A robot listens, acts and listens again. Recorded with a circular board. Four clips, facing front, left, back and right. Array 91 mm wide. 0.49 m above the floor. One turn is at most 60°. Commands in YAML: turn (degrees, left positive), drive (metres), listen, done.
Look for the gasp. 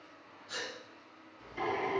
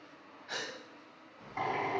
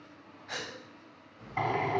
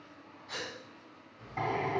turn: 60
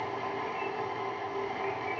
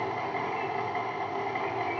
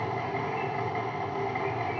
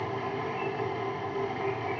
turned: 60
turn: 60
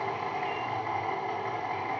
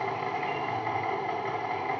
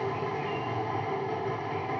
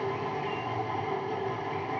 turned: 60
turn: 25
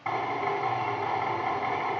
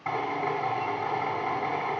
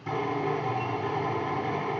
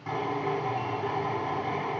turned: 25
done: "Facing where the gasp came from. I can't hear it now."